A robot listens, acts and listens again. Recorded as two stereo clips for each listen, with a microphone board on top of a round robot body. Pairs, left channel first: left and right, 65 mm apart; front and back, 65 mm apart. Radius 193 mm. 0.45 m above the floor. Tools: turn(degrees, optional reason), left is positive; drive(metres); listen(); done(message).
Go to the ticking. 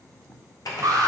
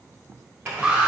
listen()
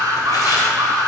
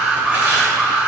listen()
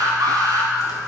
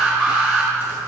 done("I can't make out ticking, only tearing paper and an alarm.")